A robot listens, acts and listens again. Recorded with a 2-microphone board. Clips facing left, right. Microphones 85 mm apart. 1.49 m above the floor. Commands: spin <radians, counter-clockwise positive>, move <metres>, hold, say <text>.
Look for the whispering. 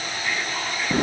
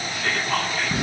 spin -1.57
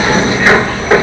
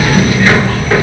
hold
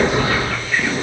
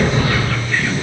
hold
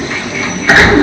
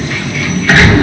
say Facing where the whispering came from. I can't hear it now.